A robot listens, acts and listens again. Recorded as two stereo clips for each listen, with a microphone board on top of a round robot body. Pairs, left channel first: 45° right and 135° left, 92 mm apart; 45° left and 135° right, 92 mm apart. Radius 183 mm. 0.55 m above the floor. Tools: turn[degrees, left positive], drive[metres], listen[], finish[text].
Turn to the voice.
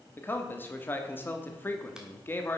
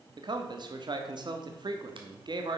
Thought: The man speaking: 110° right.
Action: turn[-110]
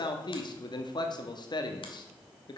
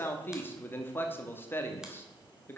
Thought: The man speaking is now 20° right.
Action: turn[-20]
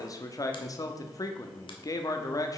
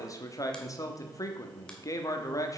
Action: finish[Found it: a man speaking, straight ahead, 1 to 2 m away.]